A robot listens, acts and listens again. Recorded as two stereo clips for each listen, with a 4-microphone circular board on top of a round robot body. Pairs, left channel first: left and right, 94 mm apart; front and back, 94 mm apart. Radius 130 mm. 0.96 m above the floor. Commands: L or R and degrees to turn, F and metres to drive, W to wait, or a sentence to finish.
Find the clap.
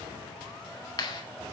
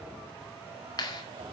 L45
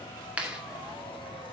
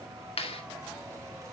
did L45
R10
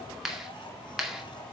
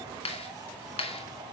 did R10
Found it: a clap, straight ahead.